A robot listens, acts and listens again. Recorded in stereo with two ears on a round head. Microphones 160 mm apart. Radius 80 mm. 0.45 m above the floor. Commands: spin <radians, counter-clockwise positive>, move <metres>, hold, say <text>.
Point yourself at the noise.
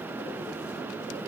hold
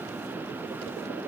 hold
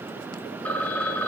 spin 0.52
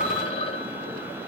spin 2.44
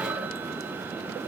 spin -0.17
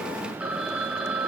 say Facing the phone ringing, 1 to 2 m away.